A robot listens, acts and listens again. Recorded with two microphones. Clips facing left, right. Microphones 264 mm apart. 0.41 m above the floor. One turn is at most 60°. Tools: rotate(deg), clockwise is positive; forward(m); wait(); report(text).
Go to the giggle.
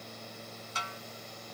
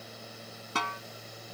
wait()
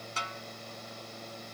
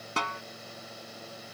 wait()
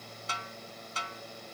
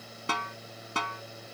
report("I can't make out a giggle to turn to.")